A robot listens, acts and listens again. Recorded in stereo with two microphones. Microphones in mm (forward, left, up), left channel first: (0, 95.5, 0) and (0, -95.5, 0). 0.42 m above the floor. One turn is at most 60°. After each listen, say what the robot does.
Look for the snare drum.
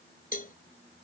Keep listening.
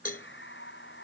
Keep listening.
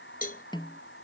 Turn 25° left.
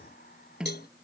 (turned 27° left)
Found it: a snare drum, straight ahead.